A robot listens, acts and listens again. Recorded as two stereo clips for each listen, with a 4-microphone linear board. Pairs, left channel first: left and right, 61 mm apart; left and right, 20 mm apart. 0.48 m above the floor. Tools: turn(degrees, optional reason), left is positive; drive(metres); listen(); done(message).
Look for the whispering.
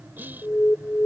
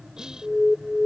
turn(degrees=-30, reason="The whispering: about 30° right or 150° right.")
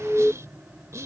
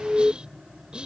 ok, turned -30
turn(degrees=-110, reason="So it is at 110° right.")
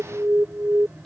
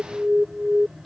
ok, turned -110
listen()
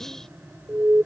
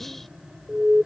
turn(degrees=10, reason="The whispering is now 10° left.")
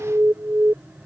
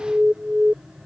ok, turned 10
listen()
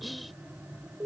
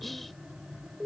done("Found it: whispering, straight ahead.")